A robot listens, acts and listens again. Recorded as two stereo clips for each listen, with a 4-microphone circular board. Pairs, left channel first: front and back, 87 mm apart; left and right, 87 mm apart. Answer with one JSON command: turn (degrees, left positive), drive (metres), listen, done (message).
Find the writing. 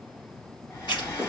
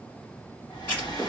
{"turn": 25}
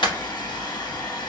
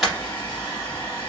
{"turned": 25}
{"done": "Facing the writing, 2 to 4 m away."}